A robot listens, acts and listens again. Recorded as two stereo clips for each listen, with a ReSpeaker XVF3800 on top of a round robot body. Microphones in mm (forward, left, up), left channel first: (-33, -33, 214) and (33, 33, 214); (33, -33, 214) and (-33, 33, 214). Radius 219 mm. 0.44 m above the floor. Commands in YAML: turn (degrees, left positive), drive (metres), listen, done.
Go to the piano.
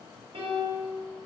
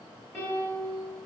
turn: 30
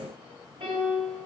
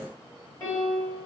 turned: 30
turn: 15
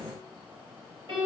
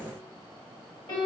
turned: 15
drive: 1.0
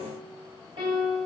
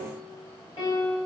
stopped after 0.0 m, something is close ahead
done: "Blocked. The piano is further on, straight ahead."